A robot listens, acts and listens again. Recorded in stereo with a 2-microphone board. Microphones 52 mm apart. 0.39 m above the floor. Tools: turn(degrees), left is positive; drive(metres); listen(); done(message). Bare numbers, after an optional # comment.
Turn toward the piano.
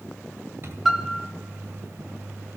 turn(-30)
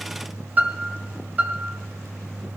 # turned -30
# So it is at 145° right.
turn(-145)
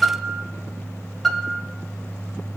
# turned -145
done("Found it: a piano, straight ahead.")